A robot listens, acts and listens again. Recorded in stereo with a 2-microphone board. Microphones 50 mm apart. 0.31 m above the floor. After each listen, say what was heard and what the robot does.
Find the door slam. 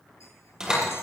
Turn 30° right.
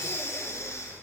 Keep listening.
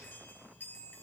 I heard a door slam, but can't make it out now. It was about 15° left or 135° right.